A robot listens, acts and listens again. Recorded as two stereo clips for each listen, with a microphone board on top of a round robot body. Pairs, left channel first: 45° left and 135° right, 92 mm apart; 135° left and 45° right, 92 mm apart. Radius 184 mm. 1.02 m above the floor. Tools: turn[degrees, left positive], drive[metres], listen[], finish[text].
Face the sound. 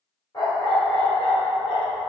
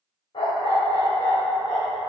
Thought: The dog barking: 80° left.
Action: turn[80]
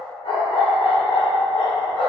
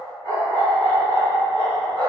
Action: finish[Found it: a dog barking, straight ahead.]